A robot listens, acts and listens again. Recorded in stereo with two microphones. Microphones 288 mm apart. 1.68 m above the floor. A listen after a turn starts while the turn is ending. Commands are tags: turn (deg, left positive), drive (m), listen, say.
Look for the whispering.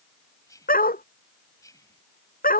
<turn deg="30"/>
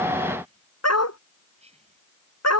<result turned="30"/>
<turn deg="-20"/>
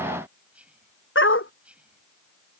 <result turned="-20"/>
<say>Found it: whispering, straight ahead.</say>